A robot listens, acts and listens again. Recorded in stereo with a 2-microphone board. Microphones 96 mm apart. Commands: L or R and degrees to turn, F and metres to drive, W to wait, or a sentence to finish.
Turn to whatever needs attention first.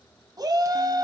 R45
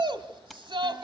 R80
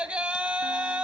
R10
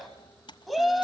Found it: a shout, straight ahead, 1 to 2 m away.